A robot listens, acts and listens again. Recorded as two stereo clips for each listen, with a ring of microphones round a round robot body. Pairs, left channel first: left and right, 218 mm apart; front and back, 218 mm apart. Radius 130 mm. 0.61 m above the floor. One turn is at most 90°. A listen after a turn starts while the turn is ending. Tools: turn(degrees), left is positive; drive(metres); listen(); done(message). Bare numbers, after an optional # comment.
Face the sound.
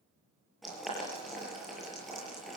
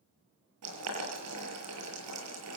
# The boiling: straight behind.
turn(90)
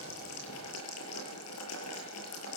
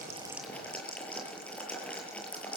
# The boiling is now 85° left.
turn(85)
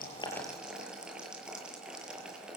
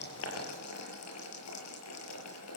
done("Found it: boiling, straight ahead, over 4 m away.")